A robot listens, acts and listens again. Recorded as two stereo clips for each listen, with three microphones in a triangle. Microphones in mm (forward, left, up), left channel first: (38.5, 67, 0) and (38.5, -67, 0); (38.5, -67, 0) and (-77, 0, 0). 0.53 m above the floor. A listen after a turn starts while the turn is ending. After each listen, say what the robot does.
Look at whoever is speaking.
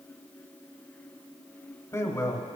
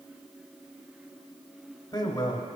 Turn 20° left.
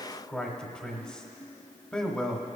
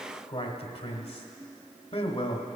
Facing the man speaking, 1 to 2 m away.